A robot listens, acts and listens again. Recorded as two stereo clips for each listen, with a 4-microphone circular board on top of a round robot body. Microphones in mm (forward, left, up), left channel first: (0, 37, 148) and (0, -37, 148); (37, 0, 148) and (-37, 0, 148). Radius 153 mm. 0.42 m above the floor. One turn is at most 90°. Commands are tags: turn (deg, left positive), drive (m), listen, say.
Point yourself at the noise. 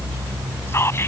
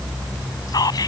<turn deg="35"/>
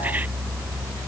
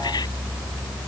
<listen/>
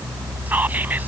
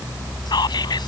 <listen/>
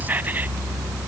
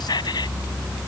<turn deg="-25"/>
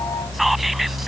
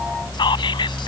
<listen/>
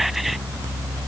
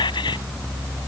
<listen/>
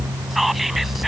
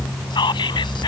<say>Found it: whispering, straight ahead.</say>